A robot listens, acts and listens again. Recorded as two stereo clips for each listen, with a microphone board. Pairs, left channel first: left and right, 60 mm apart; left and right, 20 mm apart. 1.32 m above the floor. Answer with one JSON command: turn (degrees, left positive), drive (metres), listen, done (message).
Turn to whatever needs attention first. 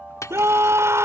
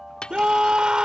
{"turn": -50}
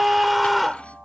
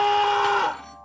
{"done": "Found it: a scream, straight ahead."}